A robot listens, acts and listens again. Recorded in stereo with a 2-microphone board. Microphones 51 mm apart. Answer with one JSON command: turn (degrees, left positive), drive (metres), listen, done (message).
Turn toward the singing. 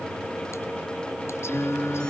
{"turn": 60}
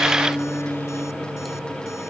{"turn": 55}
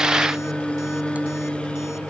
{"turn": 20}
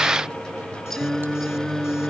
{"turn": 10}
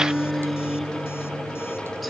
{"done": "Found it: singing, straight ahead."}